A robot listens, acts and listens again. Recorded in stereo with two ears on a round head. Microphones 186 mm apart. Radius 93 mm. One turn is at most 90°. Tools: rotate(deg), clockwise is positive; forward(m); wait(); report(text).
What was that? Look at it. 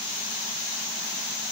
wait()
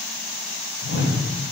rotate(-70)
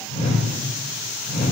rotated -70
rotate(-35)
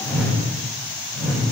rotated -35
report("Found it: a whoosh, straight ahead.")